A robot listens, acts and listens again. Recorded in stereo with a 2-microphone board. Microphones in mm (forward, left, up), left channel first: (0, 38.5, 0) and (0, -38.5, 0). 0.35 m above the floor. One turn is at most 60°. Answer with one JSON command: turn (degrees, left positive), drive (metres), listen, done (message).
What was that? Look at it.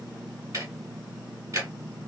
{"turn": -45}
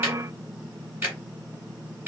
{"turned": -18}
{"turn": -25}
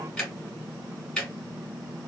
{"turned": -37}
{"turn": 10}
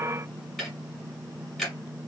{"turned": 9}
{"done": "Found it: ticking, straight ahead."}